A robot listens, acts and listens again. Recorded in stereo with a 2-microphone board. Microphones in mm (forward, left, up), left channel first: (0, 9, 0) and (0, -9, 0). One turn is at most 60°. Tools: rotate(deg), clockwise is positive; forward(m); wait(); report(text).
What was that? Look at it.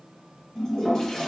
rotate(-30)
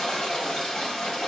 rotate(-60)
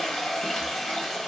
rotate(-50)
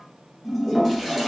rotate(-10)
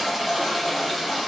report("Found it: a toilet flushing, straight ahead.")